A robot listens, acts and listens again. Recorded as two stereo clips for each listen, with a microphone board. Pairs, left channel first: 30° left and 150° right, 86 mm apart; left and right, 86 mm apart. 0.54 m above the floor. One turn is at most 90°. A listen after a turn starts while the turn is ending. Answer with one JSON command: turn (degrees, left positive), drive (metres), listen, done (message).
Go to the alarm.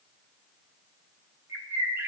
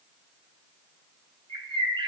{"listen": true}
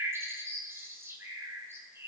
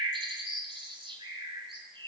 {"listen": true}
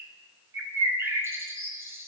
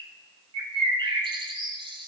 {"done": "I can't make out an alarm, only a bird."}